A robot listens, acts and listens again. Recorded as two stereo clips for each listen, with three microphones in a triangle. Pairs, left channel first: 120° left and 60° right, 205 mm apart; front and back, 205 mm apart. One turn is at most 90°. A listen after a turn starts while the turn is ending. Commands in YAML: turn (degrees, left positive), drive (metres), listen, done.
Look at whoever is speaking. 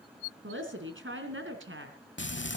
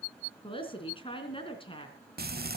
turn: -65
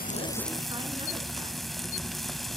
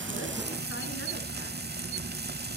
listen: true
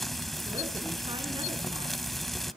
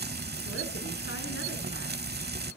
listen: true
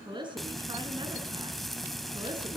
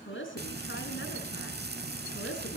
done: "Found it: a woman speaking, straight ahead."